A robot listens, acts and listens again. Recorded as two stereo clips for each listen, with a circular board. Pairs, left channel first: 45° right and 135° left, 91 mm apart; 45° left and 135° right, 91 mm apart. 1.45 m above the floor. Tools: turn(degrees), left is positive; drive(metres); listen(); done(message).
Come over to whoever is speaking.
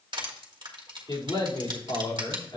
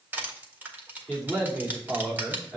turn(degrees=-40)
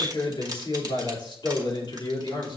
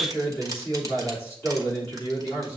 turn(degrees=-15)
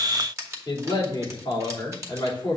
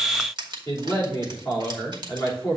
drive(metres=1.0)
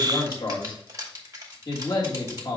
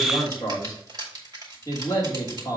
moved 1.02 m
turn(degrees=-10)
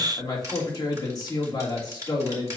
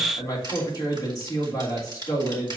drive(metres=1.0)
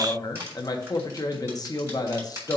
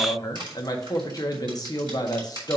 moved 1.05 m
drive(metres=1.0)
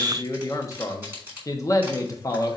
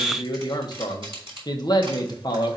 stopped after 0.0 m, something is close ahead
done("Arrived at the man speaking, straight ahead.")